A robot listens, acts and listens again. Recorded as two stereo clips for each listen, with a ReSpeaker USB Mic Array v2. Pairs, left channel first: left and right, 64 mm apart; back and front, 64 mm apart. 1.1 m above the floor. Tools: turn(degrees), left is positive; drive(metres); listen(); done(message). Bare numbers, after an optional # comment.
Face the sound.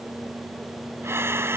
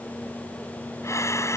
# The breathing: 140° right.
turn(-140)
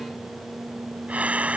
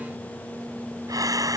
# The breathing is now 20° right.
turn(-20)
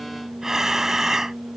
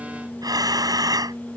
done("Facing the breathing.")